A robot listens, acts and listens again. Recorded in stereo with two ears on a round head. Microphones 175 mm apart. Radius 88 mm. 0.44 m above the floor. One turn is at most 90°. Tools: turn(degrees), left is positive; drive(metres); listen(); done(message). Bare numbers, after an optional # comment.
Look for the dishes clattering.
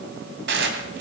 # The dishes clattering: about 65° right or 115° right.
turn(-65)
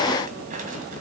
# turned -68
listen()
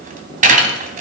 # So it is at 45° right.
turn(-45)
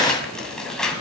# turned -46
done("Found it: dishes clattering, straight ahead, 2 to 4 m away.")